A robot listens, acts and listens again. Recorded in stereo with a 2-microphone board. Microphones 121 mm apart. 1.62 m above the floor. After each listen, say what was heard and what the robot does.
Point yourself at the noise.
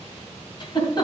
The giggle: about 40° left or 140° left. Turn 40° left.
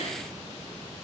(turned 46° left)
Keep listening.
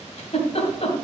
So it is at 90° left. Turn 90° left.
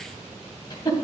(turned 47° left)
The giggle is now 40° left. Turn 40° left.
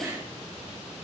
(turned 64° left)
The giggle is now 25° right. Turn 25° right.
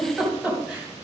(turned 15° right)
Facing the giggle, 2 to 4 m away.